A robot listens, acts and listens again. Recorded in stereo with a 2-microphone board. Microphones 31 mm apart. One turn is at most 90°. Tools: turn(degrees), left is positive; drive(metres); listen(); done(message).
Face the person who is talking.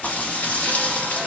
listen()
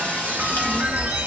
turn(degrees=25)
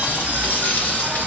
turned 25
turn(degrees=90)
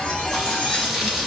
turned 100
turn(degrees=30)
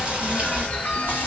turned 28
done("Found it: a child speaking, straight ahead, 1 to 2 m away.")